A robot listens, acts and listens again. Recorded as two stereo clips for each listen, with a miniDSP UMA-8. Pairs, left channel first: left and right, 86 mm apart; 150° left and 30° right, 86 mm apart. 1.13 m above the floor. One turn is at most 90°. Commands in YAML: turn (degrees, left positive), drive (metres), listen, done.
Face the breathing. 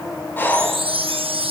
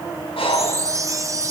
turn: 90
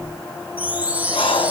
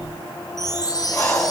turn: 80
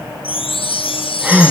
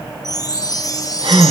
turn: -15
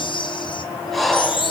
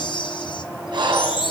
done: "Facing the breathing."